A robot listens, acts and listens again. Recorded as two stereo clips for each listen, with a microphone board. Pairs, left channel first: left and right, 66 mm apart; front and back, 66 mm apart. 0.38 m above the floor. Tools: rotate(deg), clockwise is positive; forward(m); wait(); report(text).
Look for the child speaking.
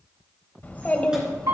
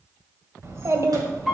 rotate(-160)
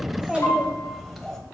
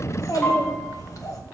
report("Facing the child speaking, 1 to 2 m away.")